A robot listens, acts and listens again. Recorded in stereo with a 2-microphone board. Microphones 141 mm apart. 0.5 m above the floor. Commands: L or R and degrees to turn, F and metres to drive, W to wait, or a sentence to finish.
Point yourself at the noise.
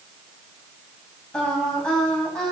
L30
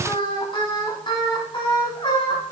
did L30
L145
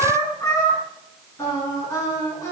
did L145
L25
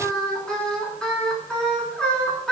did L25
Found it: singing, straight ahead, over 4 m away.